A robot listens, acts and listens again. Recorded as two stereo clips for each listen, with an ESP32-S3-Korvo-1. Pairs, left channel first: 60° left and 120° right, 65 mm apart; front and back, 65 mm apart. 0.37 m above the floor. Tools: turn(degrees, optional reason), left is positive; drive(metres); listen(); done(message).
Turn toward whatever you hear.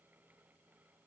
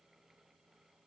listen()
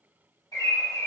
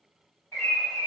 turn(degrees=50, reason="The bird: 50° left.")
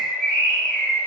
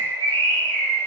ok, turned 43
turn(degrees=10, reason="The bird is now 10° left.")
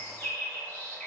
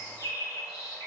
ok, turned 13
done("Found it: a bird, straight ahead.")